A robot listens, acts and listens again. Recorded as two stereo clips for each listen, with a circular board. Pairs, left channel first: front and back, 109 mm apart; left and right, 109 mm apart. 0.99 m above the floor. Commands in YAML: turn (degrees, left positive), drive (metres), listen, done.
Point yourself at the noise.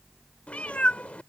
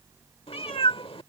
turn: 75
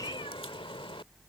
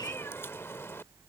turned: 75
turn: 25
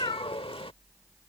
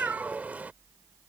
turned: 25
turn: -15
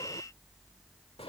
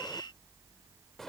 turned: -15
listen: true
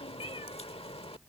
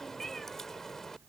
done: "Found it: a cat meowing, straight ahead."